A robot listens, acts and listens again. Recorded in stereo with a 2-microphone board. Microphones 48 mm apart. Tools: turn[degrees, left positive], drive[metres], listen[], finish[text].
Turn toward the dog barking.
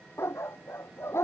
Thought: The dog barking: about 65° left or 115° left.
Action: turn[65]
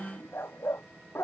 Thought: So it is at 60° left.
Action: turn[60]
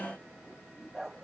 Thought: The dog barking is now 10° right.
Action: turn[-10]
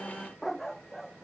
Action: finish[Found it: a dog barking, straight ahead.]